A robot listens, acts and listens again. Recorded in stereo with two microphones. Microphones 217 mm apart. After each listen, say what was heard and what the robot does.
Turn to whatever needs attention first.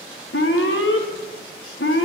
The alarm: about 65° left or 115° left. Turn 65° left.
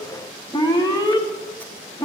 So it is at 20° left. Turn 20° left.
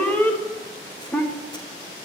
The alarm is now 10° left. Turn 10° left.
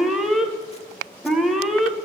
Facing the alarm.